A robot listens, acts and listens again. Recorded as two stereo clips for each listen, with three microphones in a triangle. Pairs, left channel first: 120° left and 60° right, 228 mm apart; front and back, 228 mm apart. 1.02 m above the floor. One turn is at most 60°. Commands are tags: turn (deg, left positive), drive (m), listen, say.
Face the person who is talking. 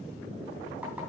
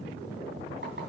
<listen/>
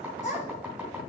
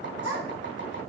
<turn deg="60"/>
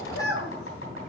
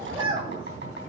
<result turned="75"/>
<turn deg="60"/>
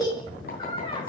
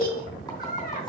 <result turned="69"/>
<turn deg="50"/>
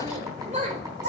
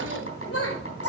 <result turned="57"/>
<say>Facing the child speaking, 2 to 4 m away.</say>